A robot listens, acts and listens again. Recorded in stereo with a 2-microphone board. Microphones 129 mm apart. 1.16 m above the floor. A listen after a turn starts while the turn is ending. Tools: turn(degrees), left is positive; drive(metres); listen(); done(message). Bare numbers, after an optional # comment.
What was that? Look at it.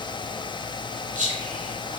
# The whispering: about 70° right or 110° right.
turn(-70)
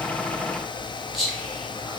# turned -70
done("Facing the whispering.")